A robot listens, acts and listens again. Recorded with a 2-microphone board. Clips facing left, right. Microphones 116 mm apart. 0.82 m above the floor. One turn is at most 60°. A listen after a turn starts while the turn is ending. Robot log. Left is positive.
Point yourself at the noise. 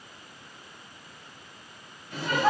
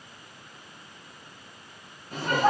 note: The laughter: about 45° right or 135° right.
cmd yaw -45
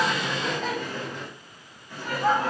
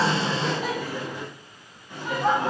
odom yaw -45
note: So it is at 25° right.
cmd yaw -25
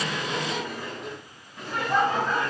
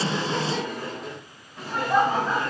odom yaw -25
note: The laughter is now 10° right.
cmd yaw -10
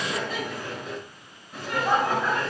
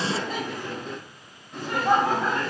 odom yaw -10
end: Found it: laughter, straight ahead.